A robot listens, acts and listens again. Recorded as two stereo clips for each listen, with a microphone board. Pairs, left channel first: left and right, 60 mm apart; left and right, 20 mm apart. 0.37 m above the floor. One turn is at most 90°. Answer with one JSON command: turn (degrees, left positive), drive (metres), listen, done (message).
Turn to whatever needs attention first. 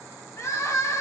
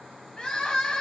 {"turn": 60}
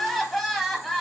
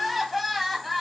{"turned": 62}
{"done": "Facing the crying."}